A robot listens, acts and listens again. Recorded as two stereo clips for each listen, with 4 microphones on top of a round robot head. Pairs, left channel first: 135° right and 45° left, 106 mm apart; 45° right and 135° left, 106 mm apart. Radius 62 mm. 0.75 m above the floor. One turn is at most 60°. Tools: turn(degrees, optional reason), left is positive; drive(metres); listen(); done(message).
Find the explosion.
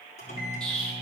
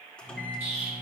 turn(degrees=60, reason="The explosion: 145° left.")
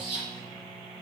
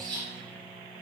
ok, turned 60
turn(degrees=60, reason="The explosion is now 85° left.")
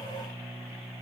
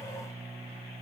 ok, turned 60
turn(degrees=25, reason="Nothing new. It was at 25° left.")
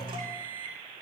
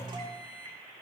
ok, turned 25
done("I heard an explosion from this way, but can't make it out now.")